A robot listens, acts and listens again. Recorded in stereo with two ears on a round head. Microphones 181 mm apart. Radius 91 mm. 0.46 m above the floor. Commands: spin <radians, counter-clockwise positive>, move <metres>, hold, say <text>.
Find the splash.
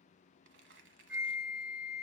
hold
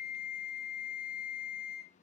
hold
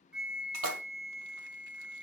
spin -1.13
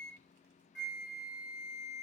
hold
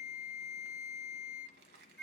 say I heard a splash, but can't make it out now. It was about straight ahead or 50° right.